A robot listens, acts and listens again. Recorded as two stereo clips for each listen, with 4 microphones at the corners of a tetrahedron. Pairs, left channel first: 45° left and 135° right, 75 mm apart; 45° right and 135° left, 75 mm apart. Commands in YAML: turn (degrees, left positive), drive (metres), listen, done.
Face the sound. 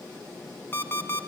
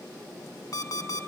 turn: -15
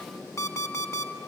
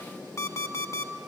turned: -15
done: "Facing the alarm clock, 1 to 2 m away."